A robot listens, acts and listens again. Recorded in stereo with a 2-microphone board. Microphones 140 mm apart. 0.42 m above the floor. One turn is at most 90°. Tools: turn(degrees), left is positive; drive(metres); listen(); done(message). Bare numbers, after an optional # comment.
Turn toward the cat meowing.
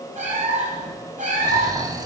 # The cat meowing: about 65° right or 115° right.
turn(-65)
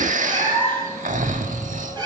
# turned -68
# So it is at 30° right.
turn(-30)
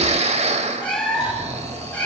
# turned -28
# The cat meowing is now 10° left.
turn(10)
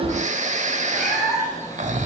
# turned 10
done("Facing the cat meowing.")